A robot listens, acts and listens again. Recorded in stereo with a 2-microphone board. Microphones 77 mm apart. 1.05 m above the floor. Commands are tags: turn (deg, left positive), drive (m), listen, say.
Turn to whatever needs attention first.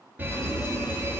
<turn deg="-25"/>
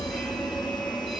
<say>Facing the fire alarm, 2 to 4 m away.</say>